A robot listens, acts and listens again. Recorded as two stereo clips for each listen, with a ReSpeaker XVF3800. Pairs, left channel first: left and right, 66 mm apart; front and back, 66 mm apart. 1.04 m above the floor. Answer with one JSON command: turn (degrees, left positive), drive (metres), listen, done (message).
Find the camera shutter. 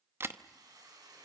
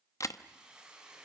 {"turn": -40}
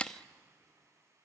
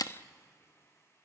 {"turn": 15}
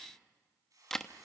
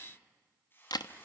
{"done": "Facing the camera shutter."}